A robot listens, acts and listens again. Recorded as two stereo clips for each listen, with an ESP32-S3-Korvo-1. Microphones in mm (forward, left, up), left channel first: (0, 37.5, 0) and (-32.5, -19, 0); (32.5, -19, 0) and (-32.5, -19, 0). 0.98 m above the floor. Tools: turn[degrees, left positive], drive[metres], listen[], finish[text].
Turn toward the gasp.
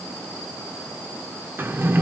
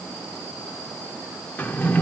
Action: listen[]
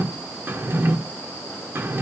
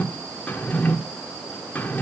Action: listen[]
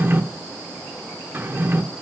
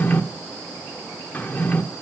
Action: finish[I can't make out a gasp to turn to.]